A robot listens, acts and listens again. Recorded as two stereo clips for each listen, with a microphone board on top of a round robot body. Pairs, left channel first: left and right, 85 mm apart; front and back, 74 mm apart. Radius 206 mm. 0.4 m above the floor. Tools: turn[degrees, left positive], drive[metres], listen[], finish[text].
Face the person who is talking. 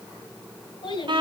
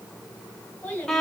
Thought: The child speaking: 70° left.
Action: turn[70]
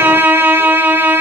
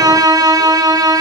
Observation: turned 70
Action: listen[]
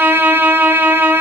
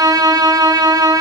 Action: listen[]
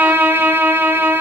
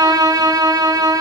Action: finish[I heard a child speaking from this way, but can't make it out now.]